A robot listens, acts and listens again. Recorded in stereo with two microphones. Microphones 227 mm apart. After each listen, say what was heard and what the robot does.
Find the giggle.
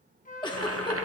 The giggle: about 20° left or 160° left. Turn 20° left.
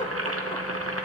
Keep listening.
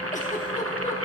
Keep listening.
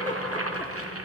I heard a giggle, but can't make it out now. It was about straight ahead or 140° left.